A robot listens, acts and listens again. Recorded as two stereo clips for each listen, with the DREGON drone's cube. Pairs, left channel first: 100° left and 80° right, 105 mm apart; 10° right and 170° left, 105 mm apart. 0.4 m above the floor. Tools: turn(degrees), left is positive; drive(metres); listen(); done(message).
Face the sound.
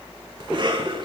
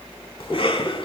turn(degrees=-40)
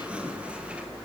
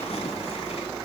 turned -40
done("Facing the cough, 2 to 4 m away.")